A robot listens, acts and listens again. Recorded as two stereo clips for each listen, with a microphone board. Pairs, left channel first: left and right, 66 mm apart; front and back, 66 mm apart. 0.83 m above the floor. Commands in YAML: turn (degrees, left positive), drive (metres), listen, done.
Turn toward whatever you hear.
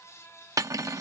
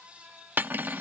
turn: -120
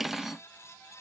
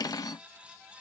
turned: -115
done: "Facing the cutlery clinking."